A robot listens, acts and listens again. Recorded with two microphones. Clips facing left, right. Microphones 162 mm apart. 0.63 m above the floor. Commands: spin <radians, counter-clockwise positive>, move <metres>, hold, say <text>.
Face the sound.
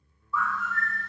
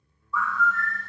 spin 0.52
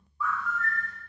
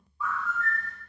spin -0.35
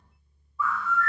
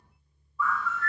say Facing the bird, 1 to 2 m away.